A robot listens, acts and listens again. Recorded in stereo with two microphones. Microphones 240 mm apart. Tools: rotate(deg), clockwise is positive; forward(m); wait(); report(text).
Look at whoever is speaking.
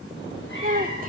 rotate(35)
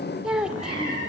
report("Found it: a child speaking, straight ahead.")